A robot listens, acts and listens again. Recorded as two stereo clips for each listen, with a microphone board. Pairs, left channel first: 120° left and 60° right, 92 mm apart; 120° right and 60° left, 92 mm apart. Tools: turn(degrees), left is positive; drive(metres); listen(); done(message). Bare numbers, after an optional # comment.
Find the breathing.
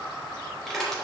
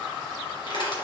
listen()
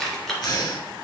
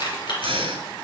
# The breathing: 75° left.
turn(75)
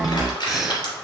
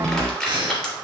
# The breathing is now 25° left.
turn(25)
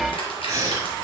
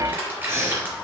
done("Facing the breathing, 1 to 2 m away.")